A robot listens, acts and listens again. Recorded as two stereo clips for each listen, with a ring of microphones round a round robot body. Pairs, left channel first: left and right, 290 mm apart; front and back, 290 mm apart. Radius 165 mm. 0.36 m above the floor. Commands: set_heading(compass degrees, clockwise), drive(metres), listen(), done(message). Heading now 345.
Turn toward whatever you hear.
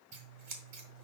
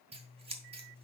set_heading(95)
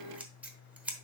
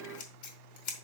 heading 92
done("Found it: scissors, straight ahead, 1 to 2 m away.")